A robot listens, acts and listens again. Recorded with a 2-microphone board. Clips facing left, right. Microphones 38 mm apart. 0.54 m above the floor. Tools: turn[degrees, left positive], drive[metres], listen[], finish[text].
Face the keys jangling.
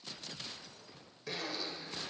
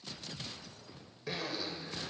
Action: listen[]
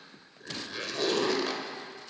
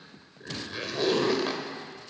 Action: listen[]
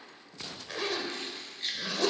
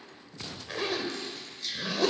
Thought: The keys jangling: about 45° left or 135° left.
Action: turn[45]
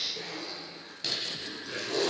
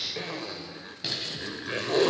Thought: So it is at 15° right.
Action: turn[-15]
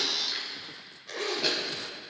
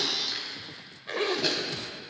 Action: finish[Facing the keys jangling.]